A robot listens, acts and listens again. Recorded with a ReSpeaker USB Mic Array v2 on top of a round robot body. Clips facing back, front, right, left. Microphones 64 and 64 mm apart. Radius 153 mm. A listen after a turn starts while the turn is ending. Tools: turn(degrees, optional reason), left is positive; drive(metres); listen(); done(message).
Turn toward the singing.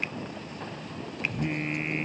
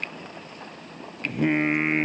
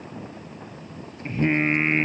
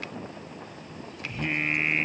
turn(degrees=-30, reason="The singing: 30° right.")
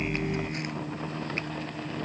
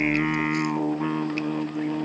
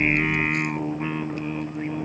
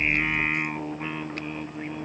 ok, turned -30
turn(degrees=-10, reason="The singing is now 10° right.")
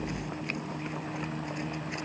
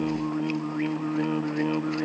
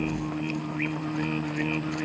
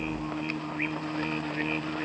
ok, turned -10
done("Facing the singing.")